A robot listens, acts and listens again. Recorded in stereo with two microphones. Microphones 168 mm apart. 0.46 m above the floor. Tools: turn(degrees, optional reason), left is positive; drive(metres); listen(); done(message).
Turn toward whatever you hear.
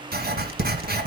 turn(degrees=-70, reason="The writing: about 70° right or 110° right.")
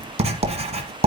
turn(degrees=-40, reason="So it is at 40° right.")
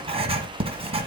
turn(degrees=-35, reason="The writing is now 35° right.")
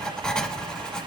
done("Found it: writing, straight ahead, 1 to 2 m away.")